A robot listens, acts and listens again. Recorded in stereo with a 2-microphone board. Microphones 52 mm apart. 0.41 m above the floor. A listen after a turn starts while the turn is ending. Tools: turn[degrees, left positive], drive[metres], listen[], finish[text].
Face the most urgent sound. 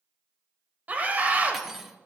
Thought: The scream: about 30° right or 150° right.
Action: turn[-30]
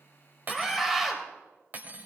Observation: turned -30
Action: finish[Facing the scream.]